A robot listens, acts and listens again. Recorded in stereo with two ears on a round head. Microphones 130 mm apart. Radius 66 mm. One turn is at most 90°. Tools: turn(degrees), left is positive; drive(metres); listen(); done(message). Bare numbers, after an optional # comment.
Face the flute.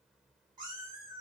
listen()
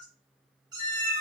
# The flute: about 45° left or 135° left.
turn(45)
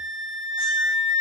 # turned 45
# So it is at 85° left.
turn(85)
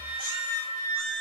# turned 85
# The flute is now 25° left.
turn(25)
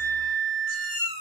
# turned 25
done("Found it: a flute, straight ahead, 1 to 2 m away.")